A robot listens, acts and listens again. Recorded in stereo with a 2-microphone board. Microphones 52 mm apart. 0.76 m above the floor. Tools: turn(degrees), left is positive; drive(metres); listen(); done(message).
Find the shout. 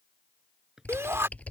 turn(degrees=-55)
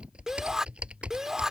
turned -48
turn(degrees=-10)
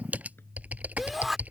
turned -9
done("Facing the shout.")